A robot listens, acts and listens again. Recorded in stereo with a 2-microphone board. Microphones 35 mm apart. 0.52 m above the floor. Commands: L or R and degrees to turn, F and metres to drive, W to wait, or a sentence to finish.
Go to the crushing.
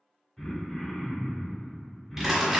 R30
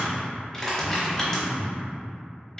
L20
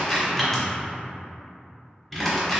L10
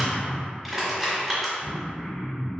F1.0
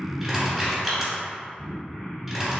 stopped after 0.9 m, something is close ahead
R10
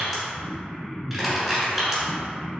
I am next to the crushing.